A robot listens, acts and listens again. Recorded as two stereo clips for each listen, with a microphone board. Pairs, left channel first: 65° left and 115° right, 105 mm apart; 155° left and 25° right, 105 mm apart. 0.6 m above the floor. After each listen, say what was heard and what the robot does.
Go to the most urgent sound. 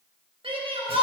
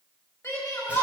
The shout: 135° right. Turn 135° right.
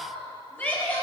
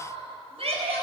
Drive 1.0 m forward.
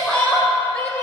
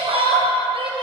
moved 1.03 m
Drive 1.0 m forward.
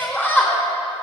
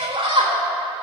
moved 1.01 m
Drive 1.0 m forward.
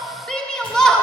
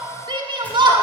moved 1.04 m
The shout is now 15° right. Turn 15° right.
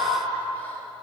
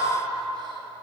Keep listening.
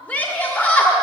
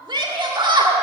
Drive 1.0 m forward.
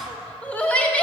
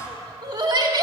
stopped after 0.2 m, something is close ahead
Arrived at the shout, straight ahead.